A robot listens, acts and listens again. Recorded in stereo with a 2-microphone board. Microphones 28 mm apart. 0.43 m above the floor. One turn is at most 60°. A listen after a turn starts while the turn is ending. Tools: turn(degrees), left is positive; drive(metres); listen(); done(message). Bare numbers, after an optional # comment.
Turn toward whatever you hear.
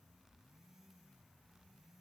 listen()
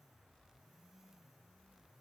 listen()
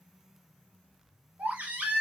# The baby crying: about 65° right or 115° right.
turn(-60)
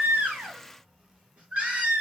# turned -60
# So it is at 55° right.
turn(-55)
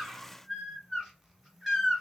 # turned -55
# The baby crying is now 10° right.
turn(-10)
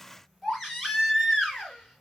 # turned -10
done("Facing the baby crying.")